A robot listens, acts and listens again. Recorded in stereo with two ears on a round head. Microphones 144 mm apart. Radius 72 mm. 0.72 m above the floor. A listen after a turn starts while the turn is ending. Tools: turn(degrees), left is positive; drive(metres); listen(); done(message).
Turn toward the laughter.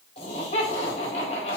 turn(degrees=45)
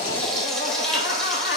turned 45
turn(degrees=90)
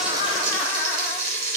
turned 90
listen()
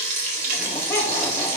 listen()
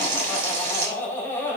turn(degrees=15)
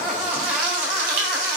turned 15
done("Facing the laughter, 2 to 4 m away.")